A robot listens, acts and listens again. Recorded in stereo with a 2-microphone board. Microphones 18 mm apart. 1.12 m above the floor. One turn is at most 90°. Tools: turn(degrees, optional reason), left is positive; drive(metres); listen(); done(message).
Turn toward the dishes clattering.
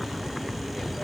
listen()
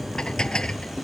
turn(degrees=55, reason="The dishes clattering: about 55° left or 125° left.")
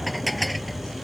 done("Facing the dishes clattering.")